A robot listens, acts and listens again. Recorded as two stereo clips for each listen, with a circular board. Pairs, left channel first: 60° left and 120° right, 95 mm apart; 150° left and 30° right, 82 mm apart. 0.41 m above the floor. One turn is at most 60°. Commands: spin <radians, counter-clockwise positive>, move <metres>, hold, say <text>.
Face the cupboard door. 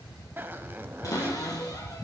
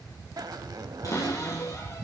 spin 1.05
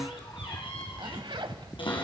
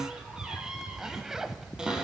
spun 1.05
spin 0.87
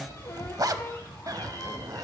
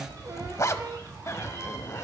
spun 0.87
say Found it: a cupboard door, straight ahead.